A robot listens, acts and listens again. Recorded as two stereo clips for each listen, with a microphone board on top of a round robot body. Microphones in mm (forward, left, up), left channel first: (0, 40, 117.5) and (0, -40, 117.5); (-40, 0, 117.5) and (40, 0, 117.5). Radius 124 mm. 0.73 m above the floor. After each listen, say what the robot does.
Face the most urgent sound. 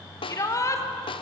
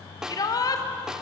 Turn 140° left.
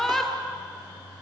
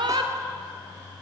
Facing the shout, 2 to 4 m away.